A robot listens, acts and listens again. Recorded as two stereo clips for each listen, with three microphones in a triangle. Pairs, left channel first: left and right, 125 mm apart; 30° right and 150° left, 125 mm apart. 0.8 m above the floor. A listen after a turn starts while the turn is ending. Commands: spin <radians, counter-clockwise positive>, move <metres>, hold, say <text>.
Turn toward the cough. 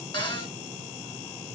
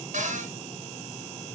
hold
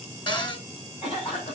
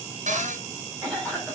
spin 0.87
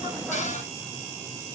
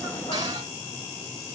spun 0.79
hold
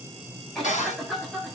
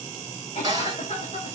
say Found it: a cough, straight ahead.